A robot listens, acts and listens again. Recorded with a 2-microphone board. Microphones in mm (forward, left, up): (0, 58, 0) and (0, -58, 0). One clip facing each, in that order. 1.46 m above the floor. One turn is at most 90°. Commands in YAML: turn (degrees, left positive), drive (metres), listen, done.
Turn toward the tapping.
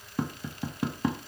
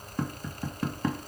turn: 30
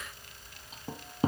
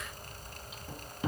turn: 90
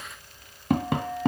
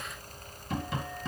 turn: 70
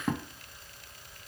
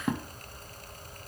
done: "Facing the tapping."